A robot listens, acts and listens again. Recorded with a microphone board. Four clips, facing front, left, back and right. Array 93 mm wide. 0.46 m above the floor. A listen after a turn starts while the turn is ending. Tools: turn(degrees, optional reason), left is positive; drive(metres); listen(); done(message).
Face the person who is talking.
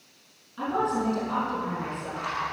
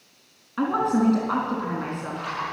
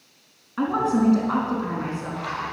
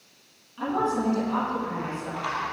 turn(degrees=130, reason="The woman speaking: 130° left.")
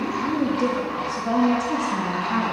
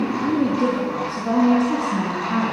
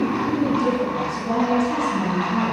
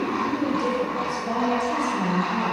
turn(degrees=50, reason="The woman speaking is now 50° left.")
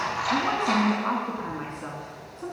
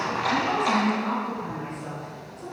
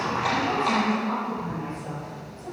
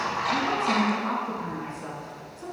turn(degrees=-10, reason="The woman speaking is now 10° right.")
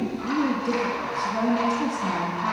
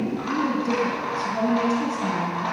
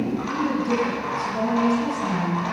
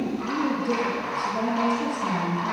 done("Found it: a woman speaking, straight ahead, 2 to 4 m away.")